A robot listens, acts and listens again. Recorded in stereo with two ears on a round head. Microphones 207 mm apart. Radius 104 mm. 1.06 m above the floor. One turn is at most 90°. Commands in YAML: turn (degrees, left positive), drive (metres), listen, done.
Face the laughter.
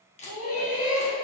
turn: 75
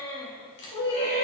turn: 25
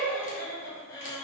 turn: 20
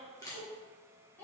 turn: 10
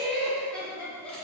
done: "Facing the laughter, 1 to 2 m away."